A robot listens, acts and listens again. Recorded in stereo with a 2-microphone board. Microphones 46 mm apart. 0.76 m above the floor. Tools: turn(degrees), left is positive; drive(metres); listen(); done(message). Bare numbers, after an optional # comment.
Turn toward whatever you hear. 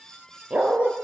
# The dog barking: about 25° right or 155° right.
turn(-25)
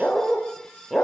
done("Found it: a dog barking, straight ahead.")